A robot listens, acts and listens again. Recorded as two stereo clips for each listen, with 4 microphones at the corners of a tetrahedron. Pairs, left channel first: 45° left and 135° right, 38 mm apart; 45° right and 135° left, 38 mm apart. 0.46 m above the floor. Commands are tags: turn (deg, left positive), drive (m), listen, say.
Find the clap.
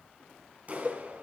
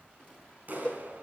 <turn deg="175"/>
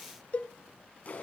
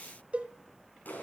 <say>Found it: a clap, straight ahead, over 4 m away.</say>